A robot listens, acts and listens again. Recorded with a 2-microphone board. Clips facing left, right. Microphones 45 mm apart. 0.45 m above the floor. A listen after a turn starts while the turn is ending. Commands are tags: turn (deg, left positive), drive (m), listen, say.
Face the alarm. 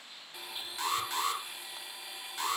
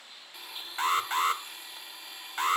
<turn deg="-40"/>
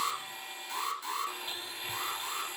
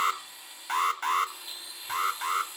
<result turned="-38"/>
<turn deg="-95"/>
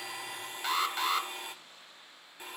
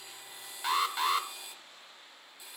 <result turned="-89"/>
<say>Facing the alarm, under 1 m away.</say>